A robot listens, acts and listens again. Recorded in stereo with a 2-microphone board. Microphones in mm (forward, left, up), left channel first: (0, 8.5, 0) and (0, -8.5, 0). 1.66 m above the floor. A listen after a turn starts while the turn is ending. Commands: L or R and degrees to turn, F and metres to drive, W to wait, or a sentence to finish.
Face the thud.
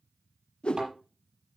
R45
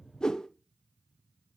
W
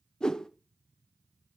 I heard a thud, but can't make it out now. It was about straight ahead or 90° right.